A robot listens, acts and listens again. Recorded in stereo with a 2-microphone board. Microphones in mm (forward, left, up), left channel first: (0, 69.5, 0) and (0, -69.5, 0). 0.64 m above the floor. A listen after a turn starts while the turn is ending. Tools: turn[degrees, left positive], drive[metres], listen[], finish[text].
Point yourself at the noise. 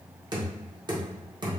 Thought: The knocking: about 30° right or 150° right.
Action: turn[-30]
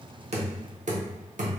Thought: So it is at 115° right.
Action: turn[-115]
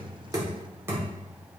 Thought: The knocking is now 20° right.
Action: turn[-20]
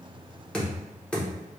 Thought: The knocking is now 10° left.
Action: turn[10]
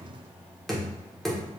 Action: finish[Facing the knocking, 1 to 2 m away.]